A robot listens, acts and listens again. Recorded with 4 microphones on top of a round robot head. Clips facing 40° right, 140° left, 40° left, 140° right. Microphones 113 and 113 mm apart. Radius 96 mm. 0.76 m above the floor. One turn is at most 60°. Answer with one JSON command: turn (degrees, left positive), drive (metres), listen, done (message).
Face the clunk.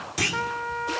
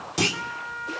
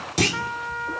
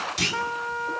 {"turn": 60}
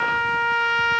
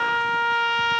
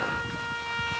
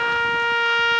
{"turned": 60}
{"turn": 20}
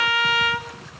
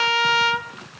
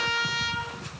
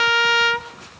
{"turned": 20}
{"done": "Facing where the clunk came from. I can't hear it now."}